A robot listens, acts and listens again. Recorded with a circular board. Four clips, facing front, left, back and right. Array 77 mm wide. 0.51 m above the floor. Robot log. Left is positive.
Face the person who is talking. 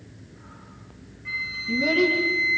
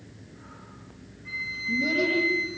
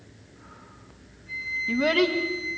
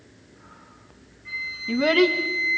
note: The child speaking: 120° right.
cmd yaw -120
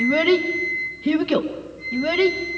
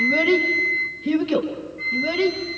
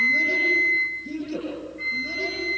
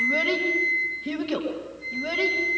end: Found it: a child speaking, straight ahead.